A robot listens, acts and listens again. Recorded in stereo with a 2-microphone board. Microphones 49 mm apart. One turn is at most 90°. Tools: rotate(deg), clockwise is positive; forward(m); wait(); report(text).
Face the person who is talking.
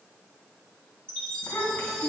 rotate(-55)
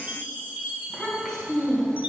rotate(-10)
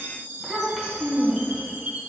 report("Found it: a child speaking, straight ahead.")